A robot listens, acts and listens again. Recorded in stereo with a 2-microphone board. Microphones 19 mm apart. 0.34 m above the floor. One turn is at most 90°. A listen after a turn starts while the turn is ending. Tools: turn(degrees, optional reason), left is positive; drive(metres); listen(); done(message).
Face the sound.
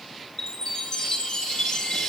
turn(degrees=35, reason="The chime: about 35° left or 145° left.")
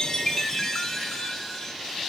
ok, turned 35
turn(degrees=10, reason="So it is at 10° left.")
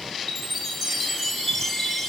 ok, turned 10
done("Found it: a chime, straight ahead, 2 to 4 m away.")